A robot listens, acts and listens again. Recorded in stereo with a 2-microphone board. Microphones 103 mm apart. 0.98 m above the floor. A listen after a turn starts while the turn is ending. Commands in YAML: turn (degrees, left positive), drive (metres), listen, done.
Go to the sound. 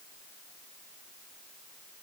listen: true
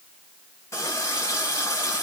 turn: 30
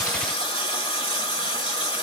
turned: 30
turn: 120
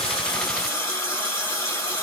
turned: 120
turn: 35
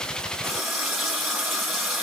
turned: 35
drive: 1.0
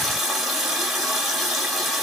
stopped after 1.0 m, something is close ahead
done: "Arrived at the running tap, straight ahead."